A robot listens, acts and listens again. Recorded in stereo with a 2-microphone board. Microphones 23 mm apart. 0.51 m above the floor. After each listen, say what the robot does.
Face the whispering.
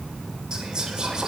Turn 30° right.
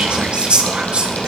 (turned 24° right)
Turn 120° right.
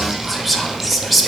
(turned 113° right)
Facing the whispering, 2 to 4 m away.